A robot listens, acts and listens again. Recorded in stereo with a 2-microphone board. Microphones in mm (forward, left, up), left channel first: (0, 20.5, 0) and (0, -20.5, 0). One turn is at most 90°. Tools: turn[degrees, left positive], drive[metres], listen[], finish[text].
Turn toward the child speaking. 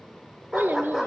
Thought: The child speaking: about 55° right or 125° right.
Action: turn[-55]
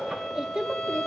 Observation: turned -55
Thought: So it is at 15° right.
Action: turn[-15]
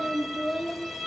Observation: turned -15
Action: finish[Found it: a child speaking, straight ahead.]